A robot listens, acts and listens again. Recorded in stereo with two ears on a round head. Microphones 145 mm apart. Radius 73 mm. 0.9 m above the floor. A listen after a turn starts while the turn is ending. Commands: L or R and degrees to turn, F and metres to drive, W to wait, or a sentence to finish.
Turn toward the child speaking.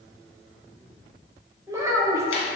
R20
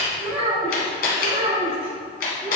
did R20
R140
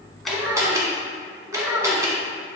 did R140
Found it: a child speaking, straight ahead.